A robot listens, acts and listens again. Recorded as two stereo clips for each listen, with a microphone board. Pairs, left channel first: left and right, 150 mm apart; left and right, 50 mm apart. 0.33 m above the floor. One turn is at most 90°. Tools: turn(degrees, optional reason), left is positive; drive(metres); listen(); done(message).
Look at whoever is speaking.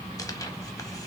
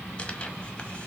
listen()
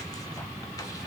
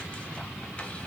listen()
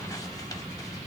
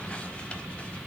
done("I can't make out anyone speaking.")